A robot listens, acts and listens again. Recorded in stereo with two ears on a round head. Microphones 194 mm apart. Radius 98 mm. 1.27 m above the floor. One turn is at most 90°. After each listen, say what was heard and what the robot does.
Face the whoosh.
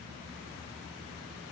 Keep listening.
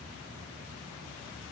Keep listening.
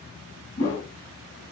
The whoosh: about 60° left or 120° left. Turn 60° left.
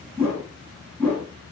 Found it: a whoosh, straight ahead, 1 to 2 m away.